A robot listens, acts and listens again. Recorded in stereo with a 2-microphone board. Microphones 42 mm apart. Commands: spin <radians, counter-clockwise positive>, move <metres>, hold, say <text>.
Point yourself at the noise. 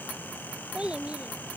spin -0.44
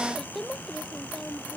say Facing the child speaking.